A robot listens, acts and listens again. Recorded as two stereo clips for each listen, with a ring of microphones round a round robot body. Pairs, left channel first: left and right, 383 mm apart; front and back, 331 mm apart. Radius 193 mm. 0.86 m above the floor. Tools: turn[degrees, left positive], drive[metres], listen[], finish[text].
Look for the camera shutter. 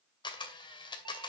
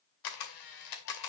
Thought: The camera shutter: 10° left.
Action: turn[10]
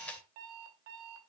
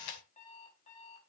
Action: finish[Found it: a camera shutter, straight ahead.]